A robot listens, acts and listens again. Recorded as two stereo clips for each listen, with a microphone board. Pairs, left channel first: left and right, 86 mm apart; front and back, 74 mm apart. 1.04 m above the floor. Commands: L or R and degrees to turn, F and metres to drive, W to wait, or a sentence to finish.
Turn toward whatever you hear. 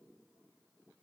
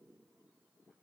W
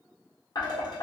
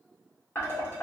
L55
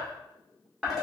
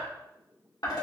Facing the dishes clattering, 2 to 4 m away.